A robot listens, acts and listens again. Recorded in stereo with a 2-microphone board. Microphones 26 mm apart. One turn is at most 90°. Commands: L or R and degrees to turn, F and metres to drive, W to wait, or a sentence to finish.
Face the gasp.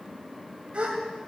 R45
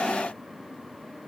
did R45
W
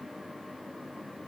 I heard a gasp, but can't make it out now. It was about straight ahead or 90° right.